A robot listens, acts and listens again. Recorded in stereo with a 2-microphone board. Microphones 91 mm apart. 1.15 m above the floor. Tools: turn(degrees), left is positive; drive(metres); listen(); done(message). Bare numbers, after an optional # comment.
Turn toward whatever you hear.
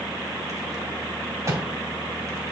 # The rattle: about 30° right or 150° right.
turn(-30)
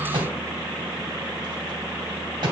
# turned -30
# So it is at 115° right.
turn(-115)
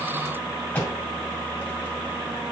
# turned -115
# The rattle is now 20° left.
turn(20)
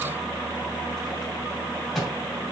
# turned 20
done("Facing the rattle, 1 to 2 m away.")